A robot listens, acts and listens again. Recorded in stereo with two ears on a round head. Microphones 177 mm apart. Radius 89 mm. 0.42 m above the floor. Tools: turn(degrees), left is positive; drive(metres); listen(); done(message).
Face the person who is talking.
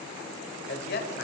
turn(degrees=50)
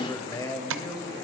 turn(degrees=20)
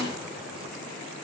listen()
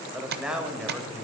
done("Facing the man speaking.")